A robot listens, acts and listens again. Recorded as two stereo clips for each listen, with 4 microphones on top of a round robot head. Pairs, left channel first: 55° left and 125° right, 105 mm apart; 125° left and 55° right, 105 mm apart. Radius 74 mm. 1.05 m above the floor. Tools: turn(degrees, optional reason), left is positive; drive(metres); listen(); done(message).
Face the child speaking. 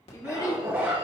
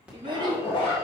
done("Found it: a child speaking, straight ahead.")